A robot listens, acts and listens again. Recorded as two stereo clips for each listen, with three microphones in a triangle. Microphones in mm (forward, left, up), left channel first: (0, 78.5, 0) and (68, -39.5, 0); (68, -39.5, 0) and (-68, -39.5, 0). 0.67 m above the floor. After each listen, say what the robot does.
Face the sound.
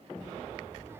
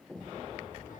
Turn 10° left.
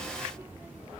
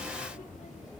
Turn 15° left.
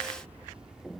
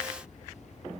Turn 25° left.
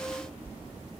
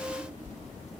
Turn 25° left.
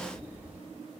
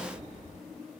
Turn 20° left.
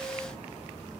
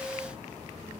Keep listening.
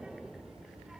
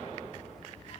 Turn 25° left.
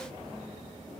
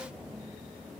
Keep listening.
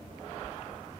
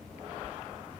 Keep listening.
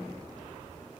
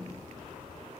Found it: a child speaking, straight ahead.